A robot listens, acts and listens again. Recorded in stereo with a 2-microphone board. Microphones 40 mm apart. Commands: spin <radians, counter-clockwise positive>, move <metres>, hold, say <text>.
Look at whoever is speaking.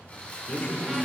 spin 0.61
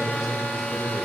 spin -0.17
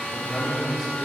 say Facing the man speaking.